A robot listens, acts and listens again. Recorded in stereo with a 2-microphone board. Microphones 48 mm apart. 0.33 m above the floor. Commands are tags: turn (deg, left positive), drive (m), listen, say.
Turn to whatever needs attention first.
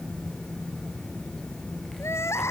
<turn deg="70"/>
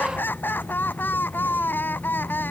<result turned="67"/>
<turn deg="45"/>
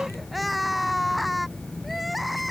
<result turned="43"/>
<say>Found it: crying, straight ahead.</say>